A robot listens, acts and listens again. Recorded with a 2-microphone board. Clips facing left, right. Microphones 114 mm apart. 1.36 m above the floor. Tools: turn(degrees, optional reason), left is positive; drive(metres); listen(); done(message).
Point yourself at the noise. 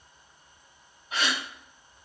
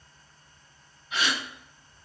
turn(degrees=40, reason="The gasp: about 40° left or 140° left.")
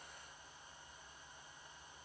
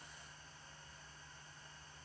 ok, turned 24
listen()
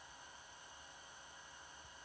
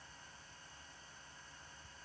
done("I heard a gasp, but can't make it out now. It was about 20° left or 115° left.")